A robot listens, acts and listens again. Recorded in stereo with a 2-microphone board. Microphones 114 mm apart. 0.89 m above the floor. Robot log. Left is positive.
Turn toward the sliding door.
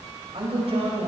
cmd idle
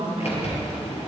note: The sliding door: about 70° left or 110° left.
cmd yaw +70
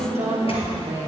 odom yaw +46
cmd idle
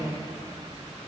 cmd idle
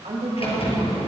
note: So it is at 60° left.
cmd yaw +60
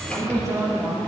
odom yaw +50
note: Nothing new. It was at 10° left.
cmd yaw +10
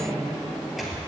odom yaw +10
end: Found it: a sliding door, straight ahead.